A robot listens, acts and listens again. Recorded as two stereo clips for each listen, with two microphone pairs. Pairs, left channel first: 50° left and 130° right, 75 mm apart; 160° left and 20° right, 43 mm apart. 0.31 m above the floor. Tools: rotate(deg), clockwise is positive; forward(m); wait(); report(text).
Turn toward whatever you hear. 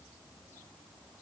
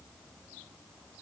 wait()
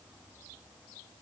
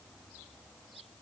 wait()
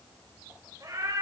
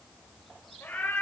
rotate(170)
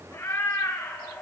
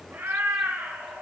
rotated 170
rotate(10)
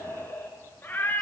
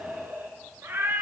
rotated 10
rotate(15)
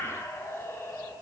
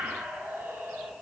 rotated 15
report("Found it: a cat meowing, straight ahead, 2 to 4 m away.")